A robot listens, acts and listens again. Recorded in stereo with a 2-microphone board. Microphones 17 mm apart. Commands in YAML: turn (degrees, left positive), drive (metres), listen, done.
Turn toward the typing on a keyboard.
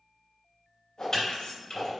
turn: 35
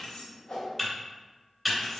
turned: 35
done: "Found it: typing on a keyboard, straight ahead, 1 to 2 m away."